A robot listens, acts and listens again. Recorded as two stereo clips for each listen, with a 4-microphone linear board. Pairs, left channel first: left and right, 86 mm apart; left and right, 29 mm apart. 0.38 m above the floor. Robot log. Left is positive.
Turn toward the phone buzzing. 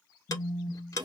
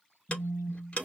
note: The phone buzzing: about 60° left or 120° left.
cmd yaw +60
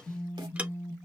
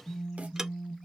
note: So it is at 35° left.
cmd yaw +35
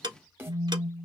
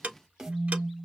note: The phone buzzing is now 10° right.
cmd yaw -10
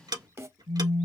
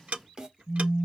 end: Facing the phone buzzing.